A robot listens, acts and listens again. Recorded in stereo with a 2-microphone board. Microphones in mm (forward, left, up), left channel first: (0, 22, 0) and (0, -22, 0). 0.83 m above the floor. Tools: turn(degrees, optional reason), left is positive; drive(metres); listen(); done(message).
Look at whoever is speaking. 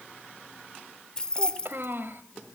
turn(degrees=-50, reason="The child speaking: about 50° right or 130° right.")
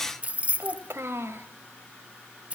turn(degrees=-80, reason="So it is at 80° right.")
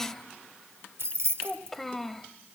done("Found it: a child speaking, straight ahead.")